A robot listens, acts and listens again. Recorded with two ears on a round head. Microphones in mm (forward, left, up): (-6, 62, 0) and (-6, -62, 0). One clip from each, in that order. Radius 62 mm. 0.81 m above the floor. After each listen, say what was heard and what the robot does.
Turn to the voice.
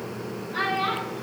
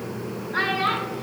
Turn 30° right.
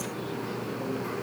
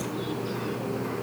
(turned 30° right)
Keep listening.
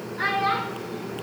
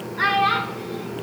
So it is at 140° right. Turn 140° right.
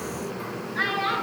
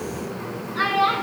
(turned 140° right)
The child speaking is now 20° right. Turn 20° right.
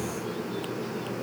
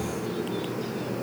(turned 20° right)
Keep listening.
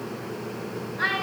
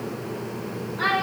Facing the child speaking.